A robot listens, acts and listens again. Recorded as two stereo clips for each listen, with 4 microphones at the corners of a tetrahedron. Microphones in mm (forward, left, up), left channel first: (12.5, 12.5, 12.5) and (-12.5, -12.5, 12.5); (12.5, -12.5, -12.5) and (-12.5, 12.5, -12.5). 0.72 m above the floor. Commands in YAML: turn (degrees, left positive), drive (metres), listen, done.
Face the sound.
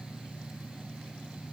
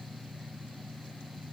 listen: true
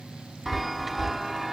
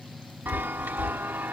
turn: 135
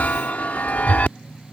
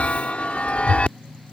done: "Facing the chime."